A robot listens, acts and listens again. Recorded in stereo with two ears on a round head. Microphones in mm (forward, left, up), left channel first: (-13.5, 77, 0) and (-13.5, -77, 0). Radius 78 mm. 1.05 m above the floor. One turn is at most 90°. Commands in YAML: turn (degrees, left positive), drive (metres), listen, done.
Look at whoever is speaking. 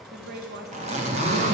turn: -60
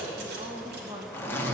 turn: -25
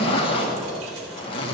listen: true
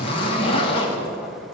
listen: true
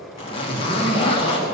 done: "Facing where the woman speaking came from. I can't hear it now."